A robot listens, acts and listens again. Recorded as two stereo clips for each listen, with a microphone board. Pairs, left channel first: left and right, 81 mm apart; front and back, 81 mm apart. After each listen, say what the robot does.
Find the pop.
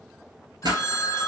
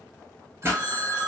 Turn 120° right.
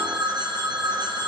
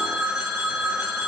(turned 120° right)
Facing where the pop came from. I can't hear it now.